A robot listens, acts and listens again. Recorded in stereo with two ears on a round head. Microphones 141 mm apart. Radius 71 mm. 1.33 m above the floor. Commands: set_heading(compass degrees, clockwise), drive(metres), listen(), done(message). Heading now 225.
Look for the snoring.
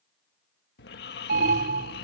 set_heading(135)
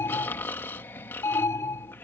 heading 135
set_heading(120)
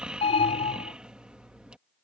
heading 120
done("Found it: snoring, straight ahead.")